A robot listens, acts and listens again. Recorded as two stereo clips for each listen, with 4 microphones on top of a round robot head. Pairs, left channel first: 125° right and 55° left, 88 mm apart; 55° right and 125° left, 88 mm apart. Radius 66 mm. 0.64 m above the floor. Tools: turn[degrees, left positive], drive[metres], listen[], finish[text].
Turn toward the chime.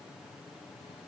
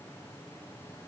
Action: listen[]
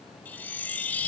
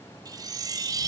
Thought: The chime: 165° left.
Action: turn[165]
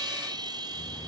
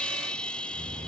Thought: The chime is now 25° left.
Action: turn[25]
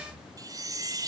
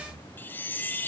Thought: The chime is now 10° left.
Action: turn[10]
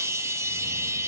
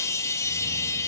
Action: finish[Found it: a chime, straight ahead, under 1 m away.]